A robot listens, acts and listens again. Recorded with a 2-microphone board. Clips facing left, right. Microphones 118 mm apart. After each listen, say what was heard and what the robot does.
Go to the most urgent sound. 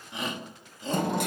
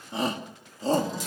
The shout: about 35° right or 145° right. Turn 35° right.
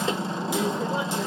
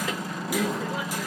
Drive 1.0 m forward.
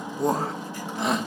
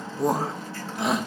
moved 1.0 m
Drive 1.0 m forward.
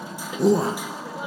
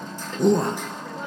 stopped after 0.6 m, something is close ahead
Arrived at the shout, straight ahead.